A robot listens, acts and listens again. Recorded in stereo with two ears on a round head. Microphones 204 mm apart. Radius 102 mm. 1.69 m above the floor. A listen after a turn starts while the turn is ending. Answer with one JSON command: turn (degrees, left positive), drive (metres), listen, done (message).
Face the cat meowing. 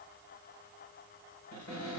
{"listen": true}
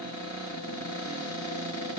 {"listen": true}
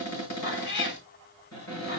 {"turn": 55}
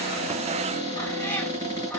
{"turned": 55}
{"turn": 10}
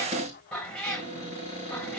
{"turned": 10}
{"done": "Facing the cat meowing, 2 to 4 m away."}